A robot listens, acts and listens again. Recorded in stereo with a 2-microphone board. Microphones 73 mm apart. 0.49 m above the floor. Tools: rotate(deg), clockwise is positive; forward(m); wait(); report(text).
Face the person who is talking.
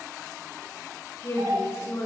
rotate(-35)
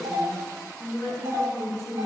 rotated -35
report("Found it: a woman speaking, straight ahead, over 4 m away.")